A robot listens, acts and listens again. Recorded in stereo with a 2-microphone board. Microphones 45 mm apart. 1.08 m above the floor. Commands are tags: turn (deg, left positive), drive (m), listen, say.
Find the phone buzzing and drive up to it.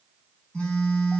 <turn deg="15"/>
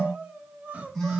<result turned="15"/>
<drive m="1.0"/>
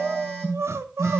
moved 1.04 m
<drive m="1.0"/>
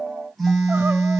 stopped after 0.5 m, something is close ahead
<say>Something is in my way. I am facing the phone buzzing but have not reached it.</say>